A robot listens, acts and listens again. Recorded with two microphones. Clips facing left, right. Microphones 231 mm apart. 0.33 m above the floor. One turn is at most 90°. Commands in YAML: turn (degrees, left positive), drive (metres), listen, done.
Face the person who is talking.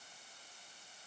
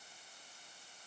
listen: true
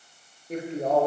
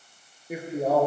turn: -30
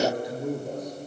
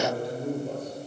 turn: 15
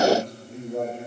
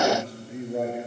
turn: -10
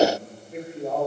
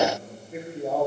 done: "Found it: a man speaking, straight ahead."